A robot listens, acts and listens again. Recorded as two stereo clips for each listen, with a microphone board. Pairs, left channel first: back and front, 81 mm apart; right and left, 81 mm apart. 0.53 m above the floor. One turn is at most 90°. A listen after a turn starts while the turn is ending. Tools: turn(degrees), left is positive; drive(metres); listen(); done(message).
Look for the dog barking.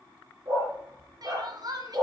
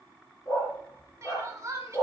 turn(degrees=-40)
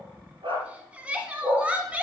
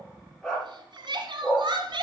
done("Facing the dog barking, over 4 m away.")